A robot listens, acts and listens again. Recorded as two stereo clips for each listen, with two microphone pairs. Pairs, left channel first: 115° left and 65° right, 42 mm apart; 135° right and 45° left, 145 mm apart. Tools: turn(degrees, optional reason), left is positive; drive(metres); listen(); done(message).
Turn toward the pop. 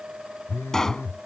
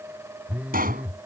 turn(degrees=35, reason="The pop: 35° left.")
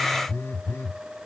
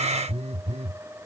done("I heard a pop from this way, but can't make it out now.")